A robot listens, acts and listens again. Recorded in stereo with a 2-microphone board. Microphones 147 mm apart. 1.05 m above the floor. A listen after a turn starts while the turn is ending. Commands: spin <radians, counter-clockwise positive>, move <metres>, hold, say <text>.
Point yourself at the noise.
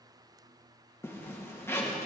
spin 0.26
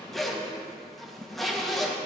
say Found it: a zipper, straight ahead.